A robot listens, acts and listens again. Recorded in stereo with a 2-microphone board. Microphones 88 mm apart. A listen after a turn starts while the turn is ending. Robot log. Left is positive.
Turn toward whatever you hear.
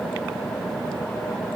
cmd idle
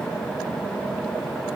cmd idle
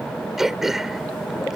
cmd yaw -30
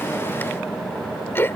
note: So it is at 30° left.
cmd yaw +30
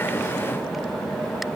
cmd idle
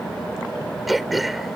end: Facing the throat clearing.